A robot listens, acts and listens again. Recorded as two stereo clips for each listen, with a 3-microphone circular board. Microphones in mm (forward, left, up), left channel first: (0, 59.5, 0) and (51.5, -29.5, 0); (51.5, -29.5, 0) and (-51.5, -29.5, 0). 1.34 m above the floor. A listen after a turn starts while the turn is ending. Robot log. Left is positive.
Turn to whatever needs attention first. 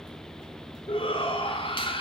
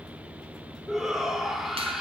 note: The shout: 95° left.
cmd yaw +95
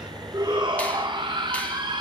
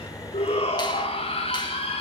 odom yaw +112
note: The shout is now 20° right.
cmd yaw -20
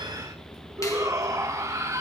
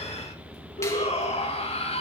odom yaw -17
end: Found it: a shout, straight ahead, 2 to 4 m away.